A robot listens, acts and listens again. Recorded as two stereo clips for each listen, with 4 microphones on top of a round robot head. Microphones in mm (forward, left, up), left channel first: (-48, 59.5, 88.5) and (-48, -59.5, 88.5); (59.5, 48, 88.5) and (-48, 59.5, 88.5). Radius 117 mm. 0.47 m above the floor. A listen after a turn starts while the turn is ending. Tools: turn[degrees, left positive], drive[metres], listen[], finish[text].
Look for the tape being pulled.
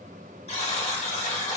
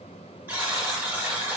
Action: listen[]
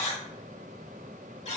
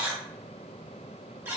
Action: listen[]
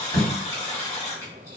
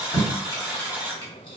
Thought: The tape being pulled: 25° left.
Action: turn[25]
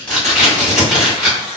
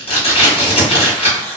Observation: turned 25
Action: finish[Found it: tape being pulled, straight ahead.]